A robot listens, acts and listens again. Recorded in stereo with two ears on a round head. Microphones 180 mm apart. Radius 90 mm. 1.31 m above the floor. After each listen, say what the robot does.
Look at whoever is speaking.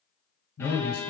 Turn 90° left.
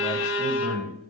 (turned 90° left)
Facing the man speaking.